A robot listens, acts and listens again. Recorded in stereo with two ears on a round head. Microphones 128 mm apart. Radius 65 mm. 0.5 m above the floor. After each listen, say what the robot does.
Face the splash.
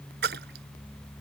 Turn 90° right.
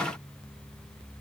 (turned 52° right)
Turn 40° right.
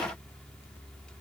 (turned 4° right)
Turn 35° right.
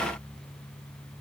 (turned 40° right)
Facing where the splash came from. I can't hear it now.